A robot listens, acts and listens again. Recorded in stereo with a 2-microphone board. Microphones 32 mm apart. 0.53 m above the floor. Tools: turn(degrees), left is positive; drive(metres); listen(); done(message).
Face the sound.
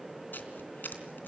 turn(degrees=90)
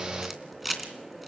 done("Facing the camera shutter.")